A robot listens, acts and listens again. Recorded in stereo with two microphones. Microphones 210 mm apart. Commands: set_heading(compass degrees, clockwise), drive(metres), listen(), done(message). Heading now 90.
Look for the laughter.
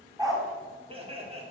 set_heading(120)
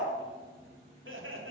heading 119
set_heading(224)
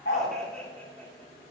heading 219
set_heading(209)
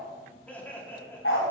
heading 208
set_heading(198)
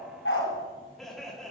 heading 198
done("Found it: laughter, straight ahead.")